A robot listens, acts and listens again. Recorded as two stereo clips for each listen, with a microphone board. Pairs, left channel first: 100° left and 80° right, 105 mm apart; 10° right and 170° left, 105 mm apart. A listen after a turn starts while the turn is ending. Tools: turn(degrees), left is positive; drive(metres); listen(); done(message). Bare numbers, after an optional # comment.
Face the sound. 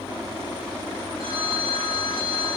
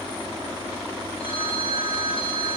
# The phone ringing: 45° right.
turn(-45)
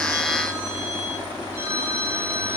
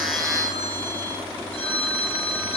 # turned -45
done("Facing the phone ringing, over 4 m away.")